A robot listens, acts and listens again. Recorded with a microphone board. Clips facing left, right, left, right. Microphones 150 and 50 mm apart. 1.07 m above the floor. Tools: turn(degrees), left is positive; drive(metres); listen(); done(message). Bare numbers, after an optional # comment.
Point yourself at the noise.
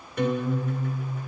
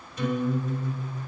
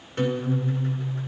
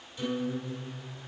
# The guitar: about 55° left or 125° left.
turn(55)
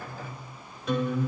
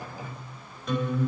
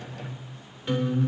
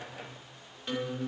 done("Found it: a guitar, straight ahead, 2 to 4 m away.")